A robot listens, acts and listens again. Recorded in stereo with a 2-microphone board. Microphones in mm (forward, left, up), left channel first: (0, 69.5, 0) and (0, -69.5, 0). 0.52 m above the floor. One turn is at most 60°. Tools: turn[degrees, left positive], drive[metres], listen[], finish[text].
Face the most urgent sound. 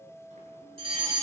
Thought: The fire alarm: about 50° right or 130° right.
Action: turn[-50]
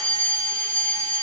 Thought: So it is at 75° right.
Action: turn[-60]
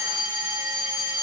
Thought: The fire alarm is now 15° right.
Action: turn[-15]
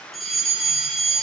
Action: finish[Found it: a fire alarm, straight ahead, over 4 m away.]